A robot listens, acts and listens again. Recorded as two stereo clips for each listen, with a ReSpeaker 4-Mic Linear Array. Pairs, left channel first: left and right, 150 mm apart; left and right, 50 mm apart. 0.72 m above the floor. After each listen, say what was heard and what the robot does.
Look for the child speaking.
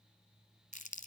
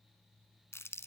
Keep listening.
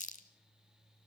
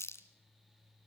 Keep listening.
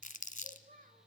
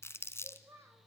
The child speaking: about 70° right or 110° right. Turn 70° right.
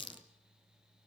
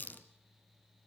Keep listening.
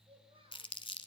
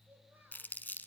Keep listening.
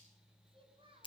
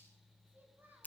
So it is at 35° right. Turn 35° right.
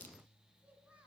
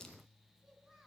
The child speaking is now 10° right. Turn 10° right.
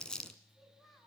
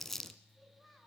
Facing the child speaking, over 4 m away.